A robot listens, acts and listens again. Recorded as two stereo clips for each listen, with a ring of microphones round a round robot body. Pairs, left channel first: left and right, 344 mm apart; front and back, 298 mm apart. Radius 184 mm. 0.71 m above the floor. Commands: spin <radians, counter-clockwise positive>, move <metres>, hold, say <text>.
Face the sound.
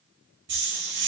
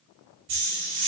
spin -2.62
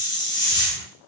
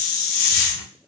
spin 0.17
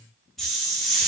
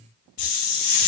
say Facing the hiss, under 1 m away.